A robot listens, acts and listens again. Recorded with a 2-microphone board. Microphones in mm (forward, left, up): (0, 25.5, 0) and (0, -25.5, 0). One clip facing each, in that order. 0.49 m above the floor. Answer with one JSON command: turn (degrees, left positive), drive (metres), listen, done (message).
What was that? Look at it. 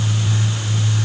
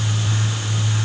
{"listen": true}
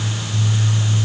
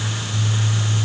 {"listen": true}
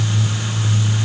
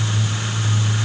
{"done": "I can't make out anything."}